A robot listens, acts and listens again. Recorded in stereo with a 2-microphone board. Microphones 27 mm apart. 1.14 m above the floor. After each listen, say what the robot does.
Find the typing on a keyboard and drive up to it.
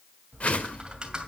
Turn 30° right.
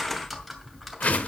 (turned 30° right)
Drive 1.0 m forward.
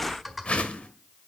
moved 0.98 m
Drive 1.0 m forward.
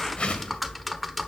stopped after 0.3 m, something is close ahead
I am next to the typing on a keyboard.